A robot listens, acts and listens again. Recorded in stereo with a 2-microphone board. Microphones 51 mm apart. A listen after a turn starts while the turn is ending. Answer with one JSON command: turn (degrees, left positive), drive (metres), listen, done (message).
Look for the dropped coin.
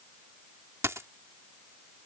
{"turn": -65}
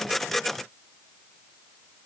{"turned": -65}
{"listen": true}
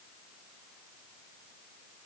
{"done": "I heard a dropped coin, but can't make it out now. It was about straight ahead or 50° right."}